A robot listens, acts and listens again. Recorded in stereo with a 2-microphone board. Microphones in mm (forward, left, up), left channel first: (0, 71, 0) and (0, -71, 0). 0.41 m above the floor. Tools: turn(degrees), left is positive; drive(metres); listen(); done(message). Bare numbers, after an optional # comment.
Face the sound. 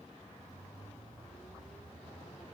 listen()
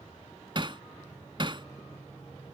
# The hammering: about 40° right or 140° right.
turn(-40)
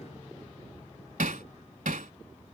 # So it is at 100° right.
turn(-100)
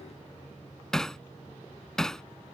done("Found it: hammering, straight ahead.")